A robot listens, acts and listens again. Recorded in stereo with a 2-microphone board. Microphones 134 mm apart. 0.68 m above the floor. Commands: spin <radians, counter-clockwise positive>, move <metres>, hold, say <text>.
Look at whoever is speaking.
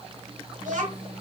spin -1.13
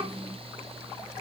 spin -0.79
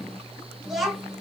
say Found it: a child speaking, straight ahead, 1 to 2 m away.